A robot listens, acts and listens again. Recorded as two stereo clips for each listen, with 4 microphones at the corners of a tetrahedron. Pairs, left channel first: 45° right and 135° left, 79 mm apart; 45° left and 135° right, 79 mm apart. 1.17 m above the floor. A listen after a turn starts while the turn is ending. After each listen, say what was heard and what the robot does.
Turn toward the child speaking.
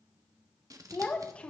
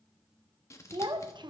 The child speaking: 120° right. Turn 120° right.
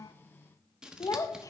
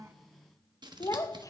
Found it: a child speaking, straight ahead.